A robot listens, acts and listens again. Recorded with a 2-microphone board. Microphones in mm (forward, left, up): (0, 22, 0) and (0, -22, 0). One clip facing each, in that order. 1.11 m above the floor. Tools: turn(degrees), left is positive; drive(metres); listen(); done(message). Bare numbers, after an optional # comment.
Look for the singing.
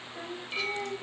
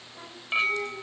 turn(90)
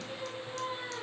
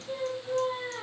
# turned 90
# So it is at 15° right.
turn(-15)
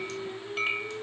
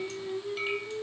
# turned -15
# The singing is now 10° right.
turn(-10)
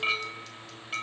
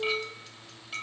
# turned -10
listen()
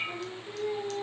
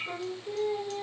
# The singing is now 20° right.
turn(-20)
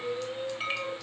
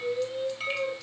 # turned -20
# The singing is now 10° right.
turn(-10)
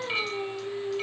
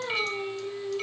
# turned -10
done("Found it: singing, straight ahead, 2 to 4 m away.")